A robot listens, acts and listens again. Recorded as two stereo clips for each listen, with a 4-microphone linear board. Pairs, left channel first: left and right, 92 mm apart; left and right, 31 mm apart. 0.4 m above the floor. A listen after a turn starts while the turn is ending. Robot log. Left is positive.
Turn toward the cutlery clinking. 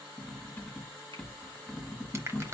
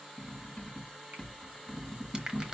cmd yaw +30
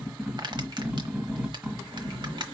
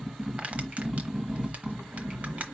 note: So it is at 15° right.
cmd yaw -15
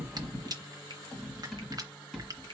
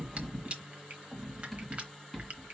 end: Found it: cutlery clinking, straight ahead.